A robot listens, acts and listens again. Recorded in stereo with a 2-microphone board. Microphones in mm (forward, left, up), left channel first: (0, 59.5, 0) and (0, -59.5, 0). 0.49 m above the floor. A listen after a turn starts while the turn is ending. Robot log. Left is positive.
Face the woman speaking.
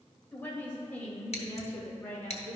note: The woman speaking: about 20° left or 160° left.
cmd yaw +20
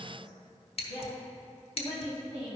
note: So it is at 140° left.
cmd yaw +140
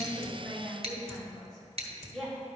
end: Found it: a woman speaking, straight ahead, over 4 m away.